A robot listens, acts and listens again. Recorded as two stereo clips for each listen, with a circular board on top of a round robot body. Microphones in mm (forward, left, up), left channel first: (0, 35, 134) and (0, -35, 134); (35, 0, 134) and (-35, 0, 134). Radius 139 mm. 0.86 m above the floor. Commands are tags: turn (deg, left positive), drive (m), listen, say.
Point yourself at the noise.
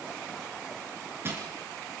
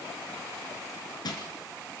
<turn deg="-30"/>
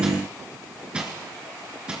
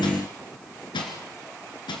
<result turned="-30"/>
<turn deg="-10"/>
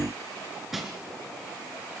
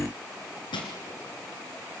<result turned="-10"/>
<say>Facing the crushing.</say>